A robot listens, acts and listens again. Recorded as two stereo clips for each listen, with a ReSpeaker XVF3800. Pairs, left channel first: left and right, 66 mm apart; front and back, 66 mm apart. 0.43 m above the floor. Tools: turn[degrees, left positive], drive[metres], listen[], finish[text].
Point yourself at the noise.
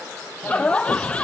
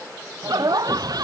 Thought: The laughter: 165° left.
Action: turn[165]
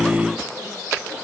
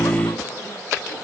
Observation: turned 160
Action: listen[]
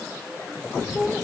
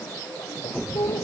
Action: finish[Facing the laughter.]